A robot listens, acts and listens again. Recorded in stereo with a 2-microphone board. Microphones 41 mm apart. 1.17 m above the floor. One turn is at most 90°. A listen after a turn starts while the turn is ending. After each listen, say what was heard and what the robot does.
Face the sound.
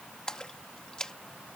The splash: about 25° left or 155° left. Turn 25° left.
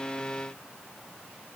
Keep listening.
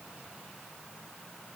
I heard a splash, but can't make it out now. It was about straight ahead or 130° left.